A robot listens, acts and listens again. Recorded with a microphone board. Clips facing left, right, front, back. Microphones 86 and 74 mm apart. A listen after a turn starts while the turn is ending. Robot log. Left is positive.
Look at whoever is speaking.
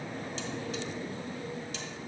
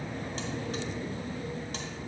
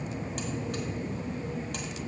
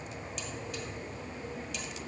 cmd idle
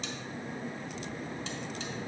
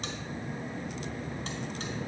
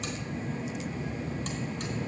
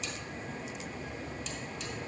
cmd idle
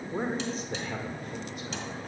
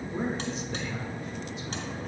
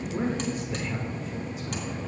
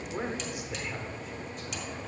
note: The man speaking: 95° left.
cmd yaw +95
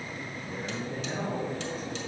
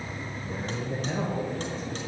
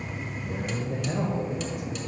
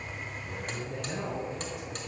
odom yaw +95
note: The man speaking is now 30° right.
cmd yaw -30
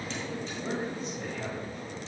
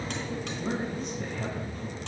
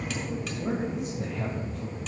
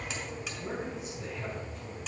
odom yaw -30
end: Facing the man speaking, 2 to 4 m away.